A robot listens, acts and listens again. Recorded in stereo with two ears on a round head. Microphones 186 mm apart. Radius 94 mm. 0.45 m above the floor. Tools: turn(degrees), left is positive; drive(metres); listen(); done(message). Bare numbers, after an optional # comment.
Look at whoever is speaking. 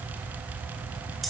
listen()
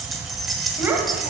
turn(-30)
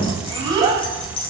# The child speaking: about 20° right or 160° right.
turn(-20)
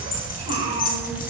# So it is at 150° right.
turn(-150)
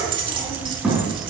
done("Found it: a child speaking, straight ahead.")